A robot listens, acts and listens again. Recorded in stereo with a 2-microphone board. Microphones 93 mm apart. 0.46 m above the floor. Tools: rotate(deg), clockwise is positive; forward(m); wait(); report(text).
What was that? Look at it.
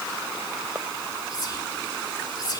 rotate(-45)
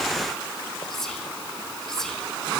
report("Found it: whispering, straight ahead, 1 to 2 m away.")